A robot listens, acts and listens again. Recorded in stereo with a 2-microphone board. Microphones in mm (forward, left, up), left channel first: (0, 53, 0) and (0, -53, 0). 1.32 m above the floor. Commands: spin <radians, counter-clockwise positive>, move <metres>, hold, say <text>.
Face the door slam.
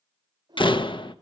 spin 0.87
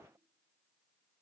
hold
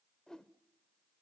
say I heard a door slam, but can't make it out now. It was about straight ahead or 80° left.